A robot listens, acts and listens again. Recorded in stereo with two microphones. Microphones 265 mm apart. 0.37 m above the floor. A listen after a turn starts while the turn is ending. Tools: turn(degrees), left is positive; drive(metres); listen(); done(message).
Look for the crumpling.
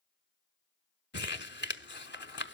turn(degrees=45)
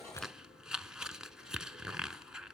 done("Found it: crumpling, straight ahead.")